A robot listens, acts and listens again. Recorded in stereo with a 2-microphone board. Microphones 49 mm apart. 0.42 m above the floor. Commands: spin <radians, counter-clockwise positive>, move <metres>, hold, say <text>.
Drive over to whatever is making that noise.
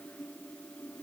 hold
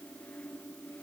hold
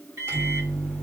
spin -1.05
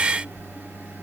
spin -0.79
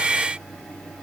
move 1.0
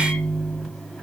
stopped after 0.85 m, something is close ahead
say I am next to the microwave.